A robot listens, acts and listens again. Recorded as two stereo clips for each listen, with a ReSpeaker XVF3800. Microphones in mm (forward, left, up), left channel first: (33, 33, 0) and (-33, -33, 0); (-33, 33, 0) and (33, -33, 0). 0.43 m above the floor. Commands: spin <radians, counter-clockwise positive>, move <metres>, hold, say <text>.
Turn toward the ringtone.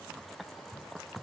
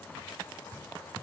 hold
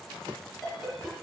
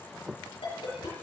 spin 2.36
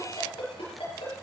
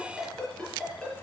spin 0.87
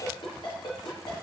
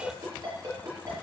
say Facing the ringtone.